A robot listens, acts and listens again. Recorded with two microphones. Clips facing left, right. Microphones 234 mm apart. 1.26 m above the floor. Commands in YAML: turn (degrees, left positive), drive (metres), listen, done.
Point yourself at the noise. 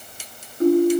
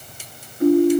turn: 45
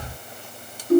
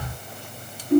turn: 90
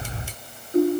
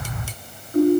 turn: 25
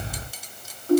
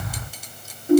turn: -15
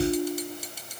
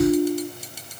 done: "Found it: a ringtone, straight ahead."